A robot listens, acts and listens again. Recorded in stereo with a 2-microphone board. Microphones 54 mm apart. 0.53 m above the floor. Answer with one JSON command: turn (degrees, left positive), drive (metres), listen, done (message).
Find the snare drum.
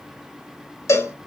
{"listen": true}
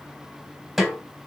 {"turn": 30}
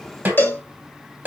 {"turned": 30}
{"turn": -35}
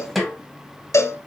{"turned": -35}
{"done": "Found it: a snare drum, straight ahead."}